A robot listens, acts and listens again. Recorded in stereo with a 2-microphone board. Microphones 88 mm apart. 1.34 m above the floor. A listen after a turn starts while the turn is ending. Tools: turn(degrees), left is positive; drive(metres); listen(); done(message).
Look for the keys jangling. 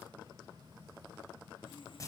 listen()
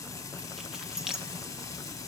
turn(degrees=-30)
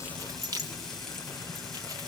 turn(degrees=-140)
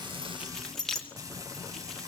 done("Facing the keys jangling.")